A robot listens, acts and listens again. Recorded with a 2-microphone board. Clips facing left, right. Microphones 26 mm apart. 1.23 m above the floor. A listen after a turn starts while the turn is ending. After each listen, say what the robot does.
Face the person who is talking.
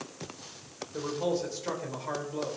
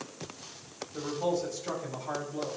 Turn 35° left.
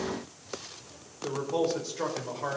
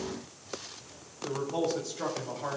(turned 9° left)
Turn 40° left.
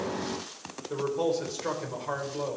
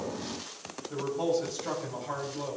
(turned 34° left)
Turn 105° left.
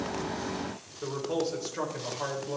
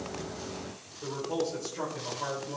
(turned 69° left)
Turn 35° left.
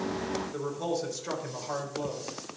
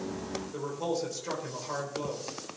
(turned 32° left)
Facing the man speaking, 2 to 4 m away.